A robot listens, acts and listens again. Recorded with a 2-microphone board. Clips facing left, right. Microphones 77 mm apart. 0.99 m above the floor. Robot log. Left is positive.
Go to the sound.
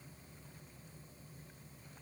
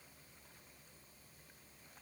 cmd idle
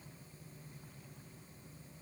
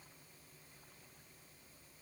cmd idle
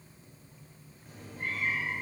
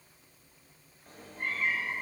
note: The cat meowing: about 45° right or 135° right.
cmd yaw -45
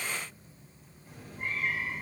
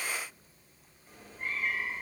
cmd fwd 1.0
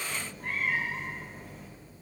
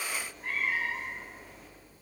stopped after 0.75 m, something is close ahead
end: Something is in my way. I am facing the cat meowing but have not reached it.